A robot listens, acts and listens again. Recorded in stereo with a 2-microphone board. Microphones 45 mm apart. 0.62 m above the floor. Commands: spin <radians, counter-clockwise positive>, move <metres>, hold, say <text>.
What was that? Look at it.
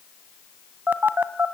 spin -0.79
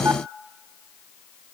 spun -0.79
hold
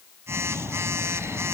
spin -1.48
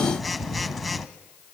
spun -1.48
say Found it: a phone buzzing, straight ahead.